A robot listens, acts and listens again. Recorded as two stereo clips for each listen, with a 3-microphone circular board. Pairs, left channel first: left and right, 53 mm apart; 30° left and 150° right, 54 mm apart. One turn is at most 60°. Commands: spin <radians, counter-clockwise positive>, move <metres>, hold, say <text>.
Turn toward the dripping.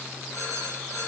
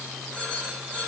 hold
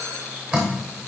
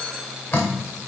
spin -0.26
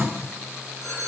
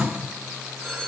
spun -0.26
hold
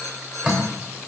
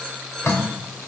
say Facing the dripping, 2 to 4 m away.